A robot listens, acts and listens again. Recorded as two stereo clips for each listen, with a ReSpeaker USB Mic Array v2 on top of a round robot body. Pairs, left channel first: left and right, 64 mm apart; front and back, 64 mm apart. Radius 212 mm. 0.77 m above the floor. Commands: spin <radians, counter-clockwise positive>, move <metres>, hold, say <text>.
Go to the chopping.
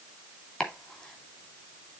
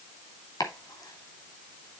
spin 0.26
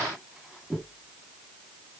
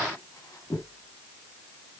move 1.0
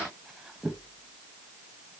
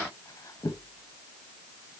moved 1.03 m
move 1.0
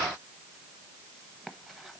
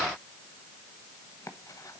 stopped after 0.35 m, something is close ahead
hold
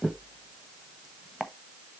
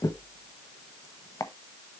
say I am next to the chopping.